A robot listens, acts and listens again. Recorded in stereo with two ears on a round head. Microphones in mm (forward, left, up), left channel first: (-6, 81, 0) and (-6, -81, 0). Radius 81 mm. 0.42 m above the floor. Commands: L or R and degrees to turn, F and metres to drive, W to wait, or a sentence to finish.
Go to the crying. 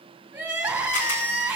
R30
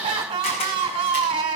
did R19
R150
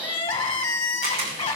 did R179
L30
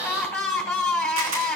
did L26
F1.0
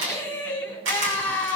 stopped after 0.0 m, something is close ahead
L10
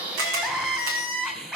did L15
Something is in my way. I am facing the crying but have not reached it.